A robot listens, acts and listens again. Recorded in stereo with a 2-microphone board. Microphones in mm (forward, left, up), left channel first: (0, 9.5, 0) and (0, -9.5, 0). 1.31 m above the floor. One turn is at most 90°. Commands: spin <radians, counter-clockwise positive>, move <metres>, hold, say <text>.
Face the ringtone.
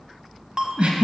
spin -0.61
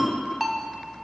say Facing the ringtone.